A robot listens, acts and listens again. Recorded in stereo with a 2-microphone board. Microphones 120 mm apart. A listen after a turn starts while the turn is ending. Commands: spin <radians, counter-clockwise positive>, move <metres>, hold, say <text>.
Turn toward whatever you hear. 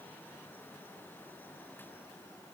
hold
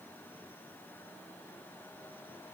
hold
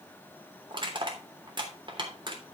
spin -0.79
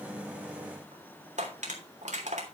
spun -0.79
spin -1.57
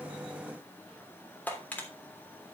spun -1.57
spin 0.26
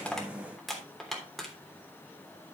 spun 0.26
say Facing the crushing, 2 to 4 m away.